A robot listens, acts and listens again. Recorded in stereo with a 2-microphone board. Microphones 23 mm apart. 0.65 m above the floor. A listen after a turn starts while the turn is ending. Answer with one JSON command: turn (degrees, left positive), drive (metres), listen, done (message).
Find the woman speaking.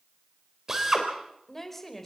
{"turn": 30}
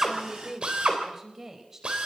{"turn": -20}
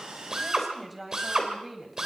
{"done": "Facing the woman speaking, over 4 m away."}